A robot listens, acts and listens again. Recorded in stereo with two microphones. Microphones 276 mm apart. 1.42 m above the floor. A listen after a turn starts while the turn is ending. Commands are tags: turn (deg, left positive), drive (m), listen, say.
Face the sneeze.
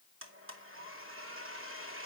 <listen/>
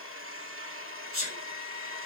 <turn deg="-55"/>
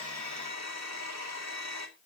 <listen/>
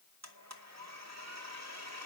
<say>I heard a sneeze, but can't make it out now. It was about straight ahead or 70° right.</say>